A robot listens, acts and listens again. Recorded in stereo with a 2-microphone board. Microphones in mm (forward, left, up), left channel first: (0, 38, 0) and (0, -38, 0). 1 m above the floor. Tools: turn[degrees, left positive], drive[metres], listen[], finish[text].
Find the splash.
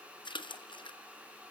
Action: turn[90]
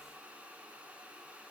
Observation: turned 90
Action: finish[Facing where the splash came from. I can't hear it now.]